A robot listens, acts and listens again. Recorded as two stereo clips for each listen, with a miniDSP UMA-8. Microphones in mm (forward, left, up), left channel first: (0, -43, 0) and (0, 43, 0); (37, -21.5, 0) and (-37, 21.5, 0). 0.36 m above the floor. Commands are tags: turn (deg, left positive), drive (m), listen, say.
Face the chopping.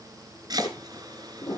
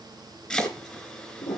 <turn deg="50"/>
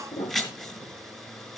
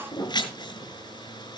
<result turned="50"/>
<say>Facing the chopping.</say>